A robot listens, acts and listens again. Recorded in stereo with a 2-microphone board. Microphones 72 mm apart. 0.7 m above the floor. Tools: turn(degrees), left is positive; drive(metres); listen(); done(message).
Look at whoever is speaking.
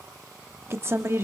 turn(degrees=-35)
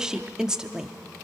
turn(degrees=-10)
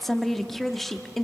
done("Facing the woman speaking, under 1 m away.")